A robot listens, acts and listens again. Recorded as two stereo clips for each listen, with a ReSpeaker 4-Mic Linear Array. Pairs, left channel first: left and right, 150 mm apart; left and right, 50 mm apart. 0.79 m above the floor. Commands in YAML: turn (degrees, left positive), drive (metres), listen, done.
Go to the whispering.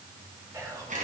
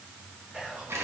turn: -20
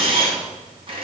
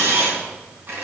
listen: true
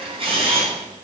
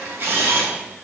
listen: true
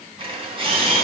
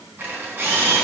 done: "I heard whispering, but can't make it out now. It was about straight ahead or 140° right. I did not reach it."